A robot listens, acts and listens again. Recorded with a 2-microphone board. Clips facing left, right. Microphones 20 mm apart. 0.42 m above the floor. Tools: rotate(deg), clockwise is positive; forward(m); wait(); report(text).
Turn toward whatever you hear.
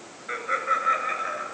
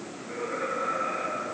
rotate(-65)
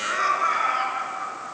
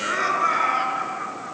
report("Found it: laughter, straight ahead.")